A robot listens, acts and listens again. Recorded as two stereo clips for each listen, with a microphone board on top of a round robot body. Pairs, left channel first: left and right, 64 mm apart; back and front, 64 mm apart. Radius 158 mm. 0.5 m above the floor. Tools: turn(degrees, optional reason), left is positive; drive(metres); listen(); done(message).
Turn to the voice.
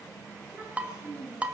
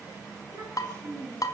turn(degrees=-30, reason="The child speaking: 30° right.")
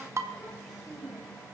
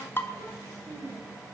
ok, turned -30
done("Found it: a child speaking, straight ahead.")